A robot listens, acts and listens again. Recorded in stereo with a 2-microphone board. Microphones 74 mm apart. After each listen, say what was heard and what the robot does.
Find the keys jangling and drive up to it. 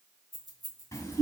Turn 30° left.
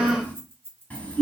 So it is at 25° right. Turn 25° right.
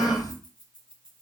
Keep listening.
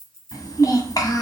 The keys jangling is now 10° left. Turn 10° left.
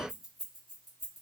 Drive 1.0 m forward.
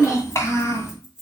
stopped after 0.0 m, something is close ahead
Blocked. The keys jangling is further on, straight ahead.